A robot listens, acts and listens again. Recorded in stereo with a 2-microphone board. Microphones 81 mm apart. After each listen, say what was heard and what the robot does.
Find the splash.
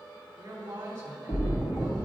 The splash: about 65° left or 115° left. Turn 65° left.
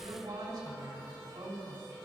Keep listening.
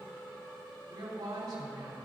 I heard a splash, but can't make it out now. It was about straight ahead or 50° left.